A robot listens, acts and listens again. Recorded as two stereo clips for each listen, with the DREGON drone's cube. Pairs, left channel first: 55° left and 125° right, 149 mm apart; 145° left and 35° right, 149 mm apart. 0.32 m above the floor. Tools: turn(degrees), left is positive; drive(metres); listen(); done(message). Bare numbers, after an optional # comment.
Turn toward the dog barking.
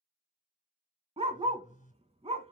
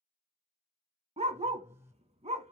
# The dog barking: 80° right.
turn(-80)
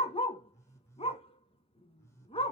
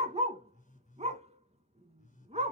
done("Found it: a dog barking, straight ahead, under 1 m away.")